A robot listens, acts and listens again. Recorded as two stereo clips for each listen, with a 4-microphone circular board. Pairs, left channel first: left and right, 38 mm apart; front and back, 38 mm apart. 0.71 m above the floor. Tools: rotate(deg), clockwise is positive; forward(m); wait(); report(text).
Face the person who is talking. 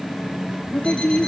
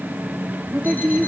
rotate(-130)
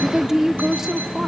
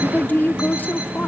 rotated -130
rotate(15)
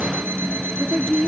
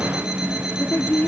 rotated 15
report("Facing the woman speaking.")